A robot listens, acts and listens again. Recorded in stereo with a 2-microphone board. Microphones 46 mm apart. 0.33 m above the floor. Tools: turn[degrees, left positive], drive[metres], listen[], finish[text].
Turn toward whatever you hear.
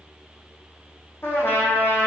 Thought: The trumpet: about 55° left or 125° left.
Action: turn[55]
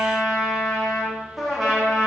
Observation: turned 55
Action: finish[Found it: a trumpet, straight ahead.]